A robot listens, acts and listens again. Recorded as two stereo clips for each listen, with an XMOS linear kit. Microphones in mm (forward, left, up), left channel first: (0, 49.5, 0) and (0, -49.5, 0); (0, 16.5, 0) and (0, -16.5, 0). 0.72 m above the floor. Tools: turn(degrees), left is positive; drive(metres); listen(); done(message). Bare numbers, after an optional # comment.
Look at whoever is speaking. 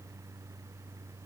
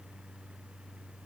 listen()
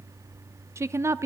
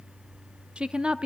# The woman speaking: about 30° right or 150° right.
turn(-30)
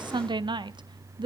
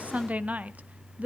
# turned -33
# So it is at 110° right.
turn(-110)
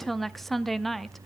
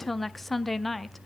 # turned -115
done("Found it: a woman speaking, straight ahead, under 1 m away.")